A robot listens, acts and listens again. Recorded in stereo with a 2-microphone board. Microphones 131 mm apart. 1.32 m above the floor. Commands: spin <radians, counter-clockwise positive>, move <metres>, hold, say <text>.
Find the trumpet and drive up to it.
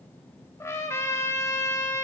spin 0.35
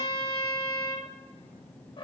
spin 2.36
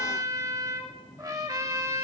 spin -0.52
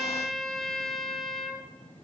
move 1.0
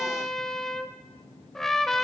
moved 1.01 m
move 1.0
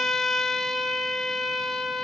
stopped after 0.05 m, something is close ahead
say Arrived at the trumpet, straight ahead.